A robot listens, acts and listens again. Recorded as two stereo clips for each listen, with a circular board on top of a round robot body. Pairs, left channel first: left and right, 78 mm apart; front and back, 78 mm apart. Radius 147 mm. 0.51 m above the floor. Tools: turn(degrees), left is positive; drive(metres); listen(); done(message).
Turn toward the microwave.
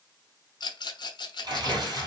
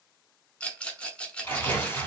listen()
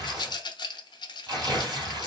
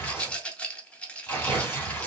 listen()
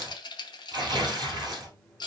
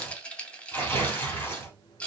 turn(degrees=10)
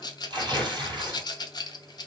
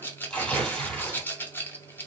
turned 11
done("Found it: a microwave, straight ahead.")